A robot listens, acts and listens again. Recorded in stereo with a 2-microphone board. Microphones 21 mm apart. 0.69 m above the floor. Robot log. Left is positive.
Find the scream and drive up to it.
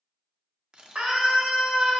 cmd yaw -90
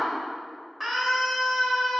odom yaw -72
note: So it is at 10° right.
cmd yaw -10
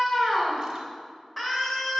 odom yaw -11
cmd fwd 1.0
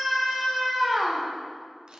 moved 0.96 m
cmd fwd 1.0
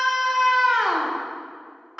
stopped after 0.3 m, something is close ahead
note: The scream is now 15° right.
cmd yaw -15
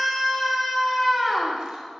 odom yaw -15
end: Arrived at the scream, straight ahead.